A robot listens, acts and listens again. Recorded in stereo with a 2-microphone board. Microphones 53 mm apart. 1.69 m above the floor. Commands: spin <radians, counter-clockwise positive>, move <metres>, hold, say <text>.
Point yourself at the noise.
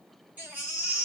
spin -0.52
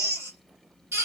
spin -2.09
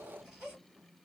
hold
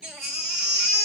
spin -0.35
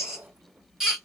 spin -0.17
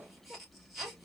say Facing the baby crying.